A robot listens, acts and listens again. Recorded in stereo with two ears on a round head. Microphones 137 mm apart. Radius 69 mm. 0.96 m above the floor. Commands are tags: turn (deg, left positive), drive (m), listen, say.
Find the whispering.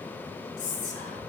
<turn deg="55"/>
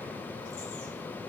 <listen/>
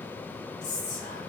<turn deg="65"/>
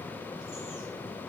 <listen/>
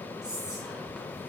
<say>Facing the whispering, under 1 m away.</say>